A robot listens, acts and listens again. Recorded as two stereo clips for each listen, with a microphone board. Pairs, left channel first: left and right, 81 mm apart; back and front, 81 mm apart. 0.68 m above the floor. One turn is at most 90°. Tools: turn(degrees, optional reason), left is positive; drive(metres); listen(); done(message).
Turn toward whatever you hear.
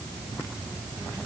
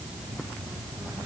listen()
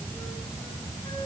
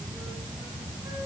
listen()
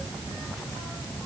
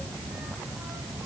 done("I can't make out anything.")